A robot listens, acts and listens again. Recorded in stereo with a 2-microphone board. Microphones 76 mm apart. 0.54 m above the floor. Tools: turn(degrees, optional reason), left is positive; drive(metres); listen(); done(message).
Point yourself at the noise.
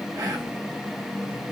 turn(degrees=-30, reason="The whispering: about 30° right or 150° right.")
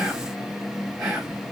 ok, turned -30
done("Found it: whispering, straight ahead, 2 to 4 m away.")